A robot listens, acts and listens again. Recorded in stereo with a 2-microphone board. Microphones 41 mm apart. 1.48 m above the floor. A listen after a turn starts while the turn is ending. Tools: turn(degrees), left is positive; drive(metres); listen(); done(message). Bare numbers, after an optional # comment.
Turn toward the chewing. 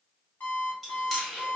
turn(30)
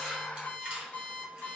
listen()
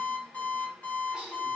listen()
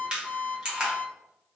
# So it is at 25° right.
turn(-25)
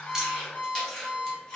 # The chewing is now 15° left.
turn(15)
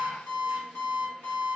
listen()
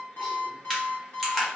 done("Found it: chewing, straight ahead, 1 to 2 m away.")